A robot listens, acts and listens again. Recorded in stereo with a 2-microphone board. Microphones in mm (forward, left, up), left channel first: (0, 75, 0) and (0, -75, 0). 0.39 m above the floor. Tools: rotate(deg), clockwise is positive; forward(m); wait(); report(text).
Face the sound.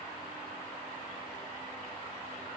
wait()
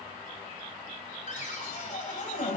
rotate(-55)
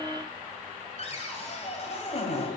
rotate(-55)
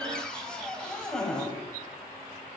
report("Facing the cupboard door.")